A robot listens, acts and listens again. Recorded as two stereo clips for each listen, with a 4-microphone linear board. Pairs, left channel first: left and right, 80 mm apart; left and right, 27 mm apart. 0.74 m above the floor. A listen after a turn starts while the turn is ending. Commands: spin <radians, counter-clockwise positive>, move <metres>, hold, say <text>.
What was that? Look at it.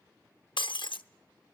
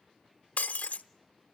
spin 1.57
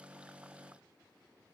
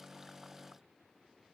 say I heard breaking glass from this way, but can't make it out now.